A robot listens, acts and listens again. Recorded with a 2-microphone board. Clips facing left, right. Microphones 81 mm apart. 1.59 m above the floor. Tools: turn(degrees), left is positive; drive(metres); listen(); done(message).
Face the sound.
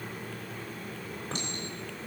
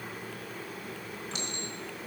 turn(degrees=40)
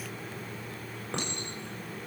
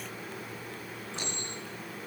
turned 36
turn(degrees=100)
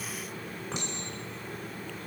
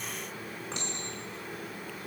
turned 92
turn(degrees=10)
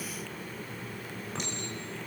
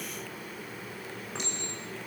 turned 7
done("Found it: a clink, straight ahead.")